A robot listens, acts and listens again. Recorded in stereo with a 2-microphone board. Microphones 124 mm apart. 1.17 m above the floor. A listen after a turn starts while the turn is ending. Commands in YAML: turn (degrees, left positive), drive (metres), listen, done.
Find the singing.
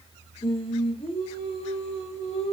turn: 60
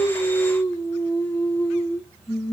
done: "Found it: singing, straight ahead."